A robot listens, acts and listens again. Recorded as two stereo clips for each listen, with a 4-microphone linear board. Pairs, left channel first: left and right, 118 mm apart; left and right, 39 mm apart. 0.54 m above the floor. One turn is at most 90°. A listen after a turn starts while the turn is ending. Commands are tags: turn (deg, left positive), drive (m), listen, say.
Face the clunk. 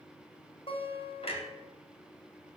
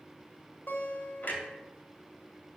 <turn deg="55"/>
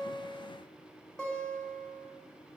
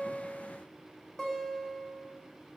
<listen/>
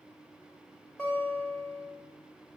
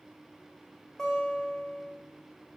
<say>I heard a clunk, but can't make it out now. It was about straight ahead or 70° left.</say>